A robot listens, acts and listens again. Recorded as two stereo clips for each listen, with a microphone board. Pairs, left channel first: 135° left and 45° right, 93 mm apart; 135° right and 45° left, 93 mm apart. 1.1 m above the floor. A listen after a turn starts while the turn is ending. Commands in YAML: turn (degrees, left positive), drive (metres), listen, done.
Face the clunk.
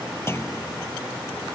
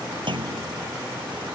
turn: 75
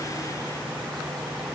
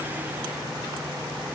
done: "I heard a clunk from this way, but can't make it out now."